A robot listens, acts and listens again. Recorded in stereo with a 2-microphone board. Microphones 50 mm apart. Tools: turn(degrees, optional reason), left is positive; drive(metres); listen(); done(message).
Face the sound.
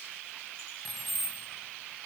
turn(degrees=30)
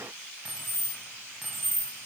turn(degrees=30)
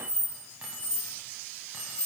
turn(degrees=-10, reason="So it is at 10° right.")
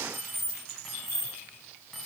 done("Found it: keys jangling, straight ahead.")